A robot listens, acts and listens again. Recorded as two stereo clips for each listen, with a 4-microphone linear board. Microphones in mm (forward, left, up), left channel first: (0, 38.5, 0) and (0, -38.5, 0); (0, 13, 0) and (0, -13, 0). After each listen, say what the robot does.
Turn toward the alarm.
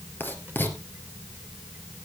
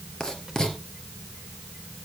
Keep listening.
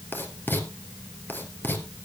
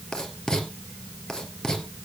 Keep listening.
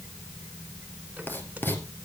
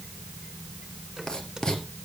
I can't make out an alarm to turn to.